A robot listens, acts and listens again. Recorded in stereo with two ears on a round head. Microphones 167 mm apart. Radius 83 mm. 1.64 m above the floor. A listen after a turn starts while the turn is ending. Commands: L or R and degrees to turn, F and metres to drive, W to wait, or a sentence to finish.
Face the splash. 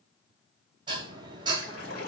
L90
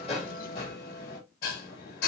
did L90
Facing where the splash came from. I can't hear it now.